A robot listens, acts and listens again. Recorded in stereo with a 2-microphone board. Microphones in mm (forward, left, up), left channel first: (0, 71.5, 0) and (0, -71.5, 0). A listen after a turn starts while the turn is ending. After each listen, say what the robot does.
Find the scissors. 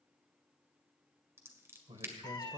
Turn 20° right.
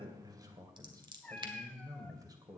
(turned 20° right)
Turn 140° right.
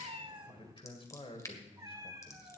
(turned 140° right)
Turn 25° left.
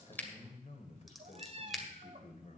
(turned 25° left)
Facing the scissors.